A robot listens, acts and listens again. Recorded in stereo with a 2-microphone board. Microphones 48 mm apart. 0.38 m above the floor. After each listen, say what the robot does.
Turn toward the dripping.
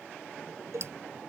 Turn 65° right.
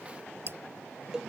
Turn 50° right.
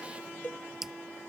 Found it: dripping, straight ahead.